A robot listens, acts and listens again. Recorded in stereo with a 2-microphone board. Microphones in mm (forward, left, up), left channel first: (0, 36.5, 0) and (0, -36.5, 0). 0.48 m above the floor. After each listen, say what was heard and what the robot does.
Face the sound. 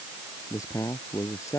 The man speaking: about 45° left or 135° left. Turn 45° left.
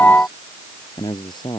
So it is at 85° left. Turn 85° left.
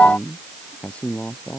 The man speaking is now 15° left. Turn 15° left.
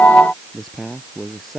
Found it: a man speaking, straight ahead.